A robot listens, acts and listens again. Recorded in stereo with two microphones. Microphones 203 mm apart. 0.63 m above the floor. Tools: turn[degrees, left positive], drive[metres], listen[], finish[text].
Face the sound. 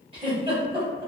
Thought: The giggle: about 25° right or 155° right.
Action: turn[-25]
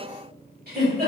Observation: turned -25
Thought: So it is at 130° right.
Action: turn[-130]
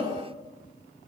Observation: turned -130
Action: listen[]
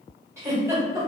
Thought: The giggle is now 15° right.
Action: turn[-15]
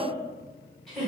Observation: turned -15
Action: finish[Facing the giggle.]